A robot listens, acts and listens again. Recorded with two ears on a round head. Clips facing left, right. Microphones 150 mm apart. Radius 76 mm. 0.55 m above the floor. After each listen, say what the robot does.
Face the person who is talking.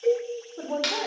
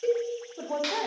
Turn 30° right.
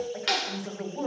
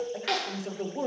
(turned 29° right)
Turn 145° right.
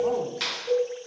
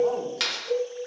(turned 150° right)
Keep listening.
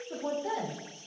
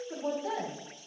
Facing the woman speaking.